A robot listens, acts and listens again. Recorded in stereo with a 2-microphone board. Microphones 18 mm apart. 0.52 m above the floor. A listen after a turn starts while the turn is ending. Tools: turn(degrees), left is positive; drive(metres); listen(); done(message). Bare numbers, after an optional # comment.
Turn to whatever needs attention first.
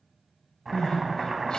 # The crying: about 75° left or 105° left.
turn(75)
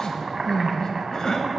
# So it is at 25° left.
turn(25)
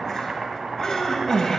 # The crying is now 25° left.
turn(25)
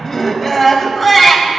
done("Found it: crying, straight ahead.")